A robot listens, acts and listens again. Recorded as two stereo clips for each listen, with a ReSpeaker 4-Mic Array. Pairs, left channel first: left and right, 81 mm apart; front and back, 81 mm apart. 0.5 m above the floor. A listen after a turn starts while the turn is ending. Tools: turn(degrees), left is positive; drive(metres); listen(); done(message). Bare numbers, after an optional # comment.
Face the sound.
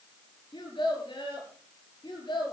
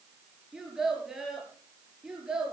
# The child speaking: 100° left.
turn(100)
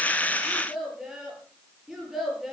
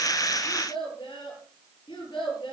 done("Facing the child speaking, over 4 m away.")